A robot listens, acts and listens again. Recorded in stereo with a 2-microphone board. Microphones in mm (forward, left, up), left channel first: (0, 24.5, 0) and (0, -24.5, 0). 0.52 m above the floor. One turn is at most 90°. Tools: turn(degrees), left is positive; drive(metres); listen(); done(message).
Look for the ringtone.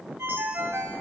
turn(degrees=-90)
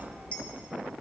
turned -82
turn(degrees=-10)
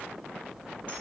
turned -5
listen()
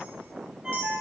turn(degrees=-15)
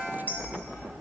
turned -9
done("Facing the ringtone, 1 to 2 m away.")